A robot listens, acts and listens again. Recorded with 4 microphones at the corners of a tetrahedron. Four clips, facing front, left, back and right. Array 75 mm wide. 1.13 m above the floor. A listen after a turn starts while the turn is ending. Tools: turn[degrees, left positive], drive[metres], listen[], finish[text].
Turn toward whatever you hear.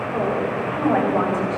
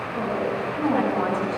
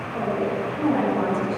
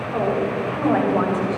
Thought: The woman speaking: 55° right.
Action: turn[-55]
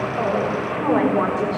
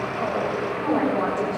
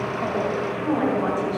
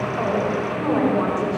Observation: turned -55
Thought: The woman speaking is now 15° right.
Action: turn[-15]
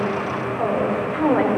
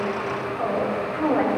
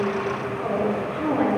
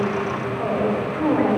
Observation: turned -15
Action: finish[Facing the woman speaking, over 4 m away.]